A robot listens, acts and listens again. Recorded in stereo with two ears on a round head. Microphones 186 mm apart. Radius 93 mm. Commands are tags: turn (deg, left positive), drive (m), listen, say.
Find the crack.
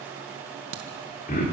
<turn deg="-70"/>
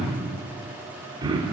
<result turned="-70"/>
<listen/>
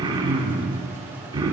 <say>I heard a crack, but can't make it out now. It was about straight ahead or 40° right.</say>